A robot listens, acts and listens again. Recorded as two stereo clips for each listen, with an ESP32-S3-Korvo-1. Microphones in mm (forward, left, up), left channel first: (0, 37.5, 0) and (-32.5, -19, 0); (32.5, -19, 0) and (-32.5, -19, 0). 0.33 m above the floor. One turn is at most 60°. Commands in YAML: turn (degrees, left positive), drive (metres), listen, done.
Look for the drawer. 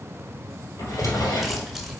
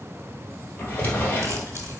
turn: 60
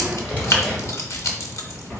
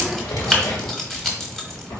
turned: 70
done: "Facing the drawer, 2 to 4 m away."